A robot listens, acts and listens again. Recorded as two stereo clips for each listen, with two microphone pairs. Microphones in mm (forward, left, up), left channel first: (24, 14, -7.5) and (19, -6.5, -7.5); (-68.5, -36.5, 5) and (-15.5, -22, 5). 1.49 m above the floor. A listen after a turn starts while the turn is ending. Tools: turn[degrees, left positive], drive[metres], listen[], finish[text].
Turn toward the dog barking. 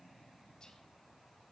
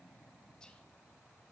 Action: listen[]
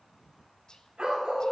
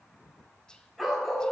Thought: The dog barking: 80° right.
Action: turn[-80]
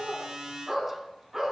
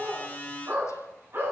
Thought: The dog barking is now 25° right.
Action: turn[-25]
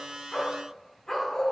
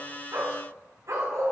Action: finish[Found it: a dog barking, straight ahead.]